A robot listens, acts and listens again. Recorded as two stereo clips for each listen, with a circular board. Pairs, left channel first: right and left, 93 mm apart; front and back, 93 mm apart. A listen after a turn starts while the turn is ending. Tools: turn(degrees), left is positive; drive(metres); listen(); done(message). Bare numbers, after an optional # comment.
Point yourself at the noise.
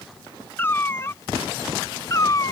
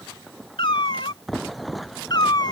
# The cat meowing: 40° right.
turn(-40)
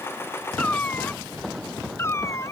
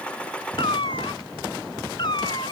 # The cat meowing is now 30° right.
turn(-30)
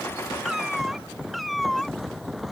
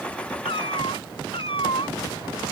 done("Facing the cat meowing.")